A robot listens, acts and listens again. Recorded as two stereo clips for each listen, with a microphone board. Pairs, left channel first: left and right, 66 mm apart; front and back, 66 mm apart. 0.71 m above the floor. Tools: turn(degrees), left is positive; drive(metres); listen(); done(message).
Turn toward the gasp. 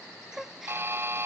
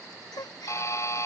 done("Found it: a gasp, straight ahead.")